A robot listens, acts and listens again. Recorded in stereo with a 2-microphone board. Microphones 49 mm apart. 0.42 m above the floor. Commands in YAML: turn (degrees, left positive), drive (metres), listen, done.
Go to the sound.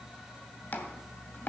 turn: 40
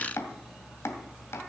turn: 100
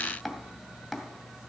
drive: 1.0
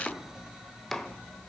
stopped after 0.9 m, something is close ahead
done: "I am next to the chopping."